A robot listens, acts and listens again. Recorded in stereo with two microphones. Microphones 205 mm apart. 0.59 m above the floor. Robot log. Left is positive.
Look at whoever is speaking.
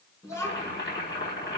cmd yaw +30
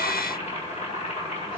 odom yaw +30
cmd idle
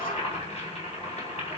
cmd idle
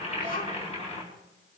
note: So it is at 135° left.
cmd yaw +135
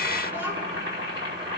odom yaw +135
cmd idle
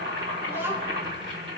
note: The child speaking is now 10° right.
cmd yaw -10
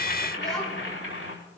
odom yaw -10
end: Facing the child speaking.